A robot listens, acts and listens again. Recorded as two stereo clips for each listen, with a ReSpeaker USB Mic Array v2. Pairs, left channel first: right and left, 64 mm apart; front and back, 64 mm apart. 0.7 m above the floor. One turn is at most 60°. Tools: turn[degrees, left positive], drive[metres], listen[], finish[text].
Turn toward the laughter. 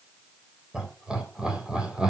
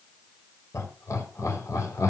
Thought: The laughter: 15° left.
Action: turn[15]
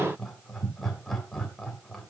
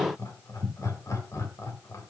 Action: finish[Found it: laughter, straight ahead.]